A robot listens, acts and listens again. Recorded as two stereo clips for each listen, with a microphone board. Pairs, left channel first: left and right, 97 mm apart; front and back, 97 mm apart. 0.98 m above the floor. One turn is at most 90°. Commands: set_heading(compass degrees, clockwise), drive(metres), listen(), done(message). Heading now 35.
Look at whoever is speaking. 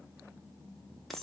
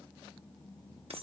listen()
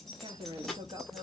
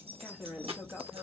set_heading(125)
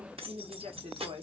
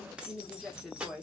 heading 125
set_heading(215)
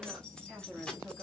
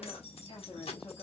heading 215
done("Found it: a woman speaking, straight ahead.")